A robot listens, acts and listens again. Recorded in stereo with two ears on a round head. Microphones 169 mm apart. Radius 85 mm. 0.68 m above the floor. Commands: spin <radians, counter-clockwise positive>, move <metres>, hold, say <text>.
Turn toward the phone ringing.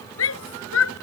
hold
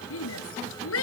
hold
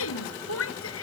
say I can't make out a phone ringing, only a shout.